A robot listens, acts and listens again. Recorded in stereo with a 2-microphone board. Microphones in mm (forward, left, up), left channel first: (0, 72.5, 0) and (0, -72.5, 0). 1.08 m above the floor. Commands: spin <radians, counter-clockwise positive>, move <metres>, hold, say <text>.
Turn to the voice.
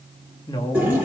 spin 0.61
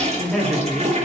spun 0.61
say Facing the woman speaking, 2 to 4 m away.